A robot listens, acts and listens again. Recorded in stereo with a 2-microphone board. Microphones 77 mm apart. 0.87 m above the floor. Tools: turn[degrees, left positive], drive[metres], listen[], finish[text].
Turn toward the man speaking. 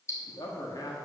Thought: The man speaking: about 55° left or 125° left.
Action: turn[55]
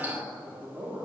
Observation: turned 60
Thought: So it is at 20° right.
Action: turn[-20]
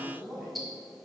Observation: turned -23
Action: finish[Facing the man speaking.]